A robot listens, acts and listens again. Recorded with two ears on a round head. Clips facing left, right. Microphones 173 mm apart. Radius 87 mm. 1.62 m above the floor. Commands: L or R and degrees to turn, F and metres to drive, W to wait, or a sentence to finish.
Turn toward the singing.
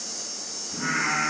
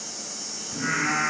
R25
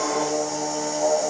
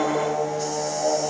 R125
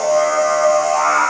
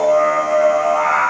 Facing the singing, 2 to 4 m away.